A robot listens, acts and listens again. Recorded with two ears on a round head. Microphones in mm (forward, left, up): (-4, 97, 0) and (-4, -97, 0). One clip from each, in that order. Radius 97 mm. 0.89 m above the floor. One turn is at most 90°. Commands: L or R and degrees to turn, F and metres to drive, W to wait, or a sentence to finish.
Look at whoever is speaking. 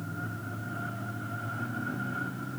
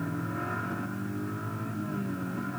W
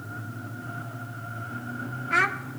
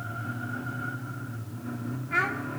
L45
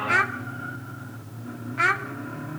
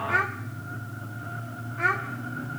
L90
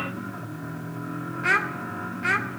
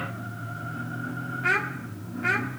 L20
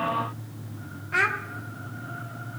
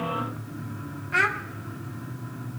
Found it: a child speaking, straight ahead.